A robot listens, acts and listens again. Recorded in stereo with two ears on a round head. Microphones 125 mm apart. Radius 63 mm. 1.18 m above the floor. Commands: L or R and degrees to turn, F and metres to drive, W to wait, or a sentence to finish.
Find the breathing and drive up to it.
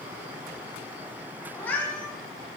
W
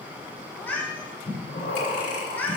L65
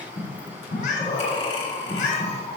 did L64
L45
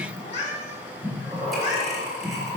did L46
F1.0
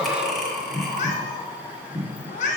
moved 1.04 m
F1.0
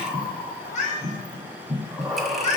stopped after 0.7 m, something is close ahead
I am next to the breathing.